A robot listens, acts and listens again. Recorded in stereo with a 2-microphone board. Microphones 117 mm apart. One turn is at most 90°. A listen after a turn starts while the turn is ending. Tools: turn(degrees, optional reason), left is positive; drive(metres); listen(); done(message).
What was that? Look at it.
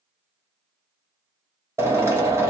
turn(degrees=-25, reason="The drill: about 25° right or 155° right.")
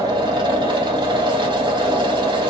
turn(degrees=-90, reason="So it is at 130° right.")
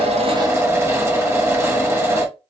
turn(degrees=-25, reason="The drill is now 25° right.")
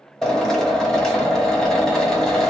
done("Facing the drill, 1 to 2 m away.")